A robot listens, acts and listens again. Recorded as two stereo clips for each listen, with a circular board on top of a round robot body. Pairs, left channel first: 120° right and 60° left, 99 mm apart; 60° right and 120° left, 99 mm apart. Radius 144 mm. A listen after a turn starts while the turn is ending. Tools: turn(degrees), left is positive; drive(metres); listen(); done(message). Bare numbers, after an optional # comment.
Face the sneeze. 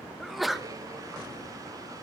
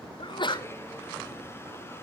# The sneeze: 30° right.
turn(-30)
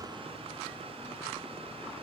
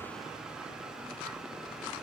done("I heard a sneeze from this way, but can't make it out now.")